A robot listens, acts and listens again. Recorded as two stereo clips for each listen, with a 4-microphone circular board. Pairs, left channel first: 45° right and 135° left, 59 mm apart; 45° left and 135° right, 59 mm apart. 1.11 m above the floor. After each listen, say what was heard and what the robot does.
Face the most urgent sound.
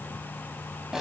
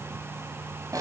Keep listening.
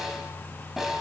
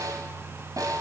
Keep listening.
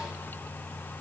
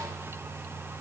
I can't make out anything urgent to turn to.